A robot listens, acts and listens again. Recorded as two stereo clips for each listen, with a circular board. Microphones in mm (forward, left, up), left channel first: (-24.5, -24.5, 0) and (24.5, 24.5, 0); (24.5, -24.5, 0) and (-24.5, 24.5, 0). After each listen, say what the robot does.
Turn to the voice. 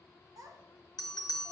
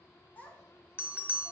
Turn 20° left.
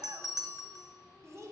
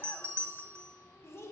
Found it: a child speaking, straight ahead, 1 to 2 m away.